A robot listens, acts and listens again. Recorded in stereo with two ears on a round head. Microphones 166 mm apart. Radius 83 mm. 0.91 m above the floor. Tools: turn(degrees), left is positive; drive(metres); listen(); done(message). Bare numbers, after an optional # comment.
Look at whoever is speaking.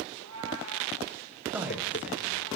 turn(-30)
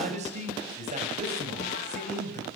# So it is at 145° right.
turn(-145)
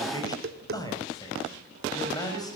# The man speaking is now 20° left.
turn(20)
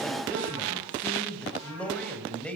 done("Found it: a man speaking, straight ahead.")